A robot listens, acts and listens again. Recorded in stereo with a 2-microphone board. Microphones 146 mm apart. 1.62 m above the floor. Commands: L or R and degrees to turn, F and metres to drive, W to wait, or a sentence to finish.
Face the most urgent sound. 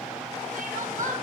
R60
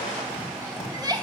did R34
R30
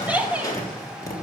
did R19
R10
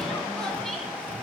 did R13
W
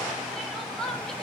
Facing the crying, 1 to 2 m away.